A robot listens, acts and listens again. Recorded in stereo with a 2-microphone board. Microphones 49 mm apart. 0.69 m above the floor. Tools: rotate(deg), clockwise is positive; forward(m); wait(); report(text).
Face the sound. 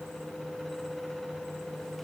wait()
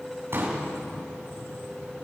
rotate(55)
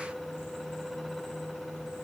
wait()
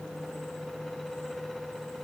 report("I heard a pop, but can't make it out now. It was about straight ahead or 70° right.")